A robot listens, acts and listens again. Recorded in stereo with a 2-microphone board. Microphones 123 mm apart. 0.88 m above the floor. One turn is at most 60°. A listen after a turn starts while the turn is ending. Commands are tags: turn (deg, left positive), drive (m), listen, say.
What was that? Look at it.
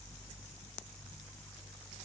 <listen/>
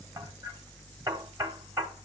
<turn deg="-25"/>
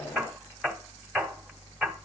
<say>Found it: hammering, straight ahead, 1 to 2 m away.</say>